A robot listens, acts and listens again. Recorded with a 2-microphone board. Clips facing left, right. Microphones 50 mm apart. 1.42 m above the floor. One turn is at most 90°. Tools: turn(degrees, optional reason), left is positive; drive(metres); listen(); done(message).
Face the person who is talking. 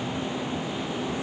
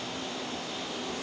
listen()
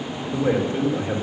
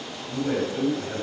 turn(degrees=55, reason="The man speaking: about 55° left or 125° left.")
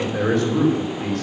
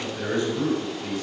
turn(degrees=70, reason="So it is at 70° left.")
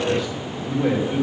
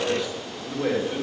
done("Facing the man speaking, 2 to 4 m away.")